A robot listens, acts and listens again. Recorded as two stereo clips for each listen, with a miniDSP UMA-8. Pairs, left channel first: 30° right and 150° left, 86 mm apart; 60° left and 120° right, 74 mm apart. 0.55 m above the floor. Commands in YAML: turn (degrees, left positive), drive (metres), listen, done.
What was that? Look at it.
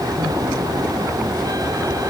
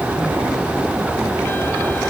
listen: true
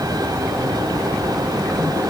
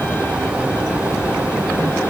listen: true
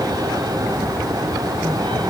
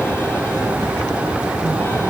done: "I can't make out anything to turn to."